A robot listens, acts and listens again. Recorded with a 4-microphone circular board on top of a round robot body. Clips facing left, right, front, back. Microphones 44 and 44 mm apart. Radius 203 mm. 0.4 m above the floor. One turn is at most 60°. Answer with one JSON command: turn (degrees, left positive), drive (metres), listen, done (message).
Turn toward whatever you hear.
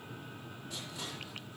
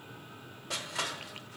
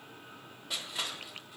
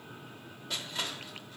{"turn": -60}
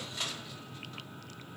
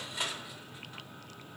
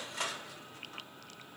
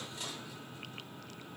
{"turn": -15}
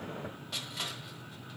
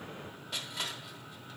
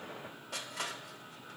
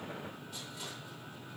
{"done": "Facing the crushing."}